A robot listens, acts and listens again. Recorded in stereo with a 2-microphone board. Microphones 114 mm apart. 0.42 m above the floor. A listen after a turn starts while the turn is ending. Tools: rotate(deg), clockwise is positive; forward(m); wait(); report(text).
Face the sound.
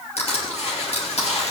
rotate(-65)
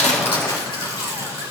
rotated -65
rotate(-50)
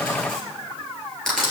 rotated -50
report("Facing the crushing.")